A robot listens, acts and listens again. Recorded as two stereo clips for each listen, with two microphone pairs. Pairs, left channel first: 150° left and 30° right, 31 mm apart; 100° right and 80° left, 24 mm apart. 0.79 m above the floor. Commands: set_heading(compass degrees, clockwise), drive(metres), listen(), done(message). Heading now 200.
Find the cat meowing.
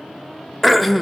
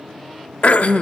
listen()
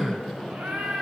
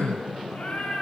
set_heading(265)
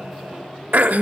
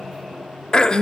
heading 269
listen()
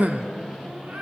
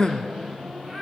listen()
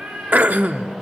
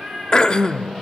done("Facing the cat meowing, over 4 m away.")